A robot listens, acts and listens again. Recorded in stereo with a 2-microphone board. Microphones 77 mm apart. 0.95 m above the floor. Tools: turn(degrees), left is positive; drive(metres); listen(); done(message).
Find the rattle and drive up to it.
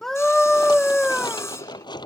turn(degrees=70)
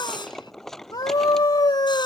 drive(metres=1.0)
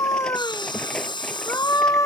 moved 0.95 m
turn(degrees=10)
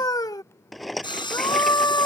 drive(metres=1.0)
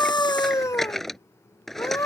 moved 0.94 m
drive(metres=1.0)
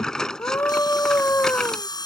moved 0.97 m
turn(degrees=10)
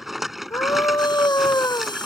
drive(metres=1.0)
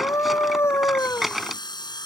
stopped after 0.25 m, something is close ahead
done("Arrived at the rattle, straight ahead.")